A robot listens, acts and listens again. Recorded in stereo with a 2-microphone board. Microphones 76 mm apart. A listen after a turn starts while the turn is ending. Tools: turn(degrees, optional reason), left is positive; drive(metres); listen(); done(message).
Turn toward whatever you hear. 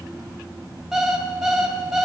turn(degrees=-30)
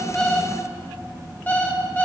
turn(degrees=25, reason="So it is at 25° left.")
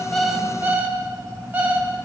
turn(degrees=-25, reason="The alarm clock is now 25° right.")
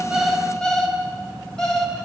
turn(degrees=10, reason="The alarm clock is now 10° left.")
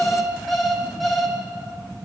done("Facing the alarm clock, 2 to 4 m away.")